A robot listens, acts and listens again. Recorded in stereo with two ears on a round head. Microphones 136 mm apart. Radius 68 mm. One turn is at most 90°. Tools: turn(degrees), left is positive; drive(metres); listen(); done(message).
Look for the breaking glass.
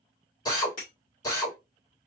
turn(degrees=55)
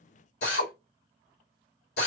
listen()
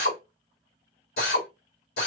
done("I heard breaking glass, but can't make it out now. It was about straight ahead or 70° left.")